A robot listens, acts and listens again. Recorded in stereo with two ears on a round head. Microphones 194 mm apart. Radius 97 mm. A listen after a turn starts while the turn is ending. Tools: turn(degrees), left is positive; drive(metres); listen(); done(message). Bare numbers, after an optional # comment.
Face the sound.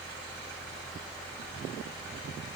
listen()
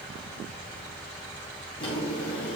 # The drawer: about 25° left or 155° left.
turn(25)
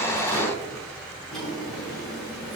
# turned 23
done("Facing the drawer, over 4 m away.")